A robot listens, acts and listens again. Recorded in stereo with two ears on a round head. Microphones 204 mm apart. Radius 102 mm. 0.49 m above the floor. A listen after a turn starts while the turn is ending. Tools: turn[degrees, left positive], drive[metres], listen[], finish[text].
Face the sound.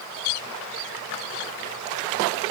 Action: listen[]
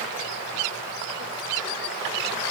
Action: listen[]
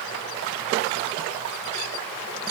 Action: finish[I can't make out anything.]